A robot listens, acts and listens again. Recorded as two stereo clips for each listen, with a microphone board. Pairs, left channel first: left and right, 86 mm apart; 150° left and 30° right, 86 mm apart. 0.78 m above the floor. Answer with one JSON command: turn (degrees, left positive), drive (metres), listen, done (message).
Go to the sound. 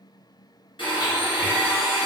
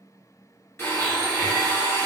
{"turn": 90}
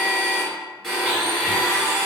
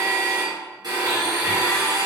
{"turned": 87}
{"drive": 1.0}
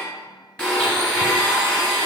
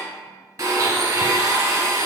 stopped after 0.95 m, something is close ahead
{"turn": 10}
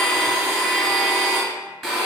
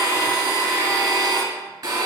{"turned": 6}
{"done": "I am next to the blender."}